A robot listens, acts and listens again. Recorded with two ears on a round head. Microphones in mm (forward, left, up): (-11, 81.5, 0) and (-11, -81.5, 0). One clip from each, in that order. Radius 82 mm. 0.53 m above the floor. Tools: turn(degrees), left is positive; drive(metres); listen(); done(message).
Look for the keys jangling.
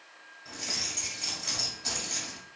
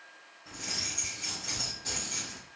turn(degrees=65)
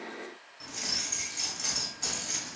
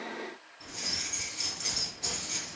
turn(degrees=50)
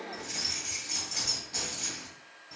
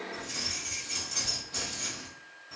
done("Found it: keys jangling, straight ahead, 1 to 2 m away.")